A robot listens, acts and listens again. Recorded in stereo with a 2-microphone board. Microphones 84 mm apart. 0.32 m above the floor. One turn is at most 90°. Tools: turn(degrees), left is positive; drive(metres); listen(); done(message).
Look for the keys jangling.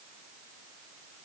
listen()
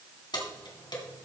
turn(degrees=60)
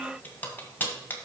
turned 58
turn(degrees=25)
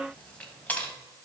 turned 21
turn(degrees=20)
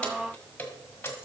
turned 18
turn(degrees=25)
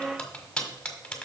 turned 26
turn(degrees=10)
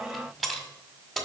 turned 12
done("Found it: keys jangling, straight ahead.")